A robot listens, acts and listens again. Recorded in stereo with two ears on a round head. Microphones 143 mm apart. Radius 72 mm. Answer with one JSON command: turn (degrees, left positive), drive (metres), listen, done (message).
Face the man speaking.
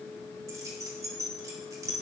{"listen": true}
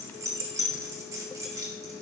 {"listen": true}
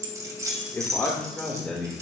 {"turn": 30}
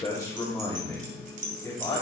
{"turn": 160}
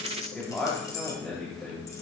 {"done": "Facing the man speaking."}